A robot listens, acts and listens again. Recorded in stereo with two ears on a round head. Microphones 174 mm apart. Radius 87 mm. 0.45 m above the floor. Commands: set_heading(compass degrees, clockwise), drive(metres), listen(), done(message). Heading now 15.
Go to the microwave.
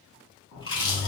set_heading(300)
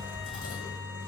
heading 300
set_heading(290)
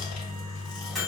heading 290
drive(1.0)
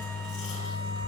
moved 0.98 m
set_heading(275)
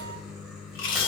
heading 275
drive(1.0)
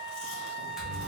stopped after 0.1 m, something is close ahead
listen()
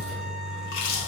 done("Arrived at the microwave, straight ahead.")